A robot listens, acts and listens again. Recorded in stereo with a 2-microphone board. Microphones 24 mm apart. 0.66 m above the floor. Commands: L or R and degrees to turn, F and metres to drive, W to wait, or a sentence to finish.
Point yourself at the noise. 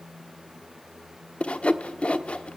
L60
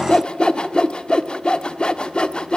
L50
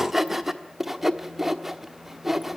R10
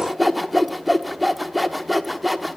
Facing the sawing, 1 to 2 m away.